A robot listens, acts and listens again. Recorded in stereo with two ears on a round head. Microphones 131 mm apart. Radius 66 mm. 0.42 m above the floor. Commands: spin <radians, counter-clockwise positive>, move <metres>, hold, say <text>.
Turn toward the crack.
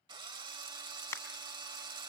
spin 0.35
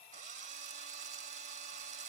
hold
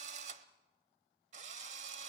say I heard a crack, but can't make it out now. It was about straight ahead or 140° left.